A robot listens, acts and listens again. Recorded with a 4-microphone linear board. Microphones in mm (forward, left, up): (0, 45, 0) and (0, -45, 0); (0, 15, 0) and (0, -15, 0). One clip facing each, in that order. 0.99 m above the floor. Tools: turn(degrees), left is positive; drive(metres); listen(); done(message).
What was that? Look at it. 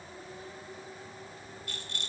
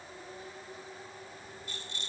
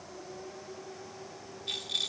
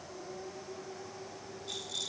turn(degrees=60)
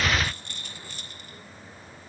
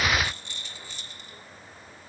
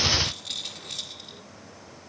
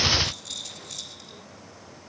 turn(degrees=55)
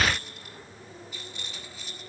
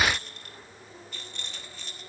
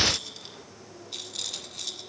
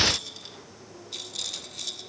done("Found it: a rattle, straight ahead, 1 to 2 m away.")